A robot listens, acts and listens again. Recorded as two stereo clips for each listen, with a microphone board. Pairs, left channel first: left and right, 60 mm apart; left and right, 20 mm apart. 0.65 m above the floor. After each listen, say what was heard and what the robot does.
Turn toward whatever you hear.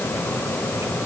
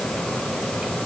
Keep listening.
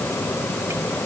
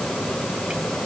Keep listening.
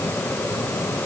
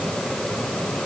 I can't make out anything to turn to.